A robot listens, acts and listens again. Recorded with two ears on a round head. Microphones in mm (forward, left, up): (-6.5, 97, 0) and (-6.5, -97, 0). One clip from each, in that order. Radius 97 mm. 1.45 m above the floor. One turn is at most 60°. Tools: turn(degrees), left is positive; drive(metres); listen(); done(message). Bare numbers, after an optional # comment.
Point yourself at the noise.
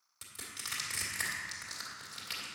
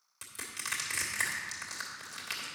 turn(-30)
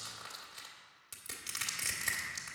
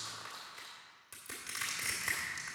# So it is at 20° left.
turn(20)
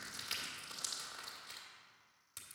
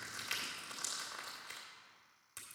done("Facing the crushing.")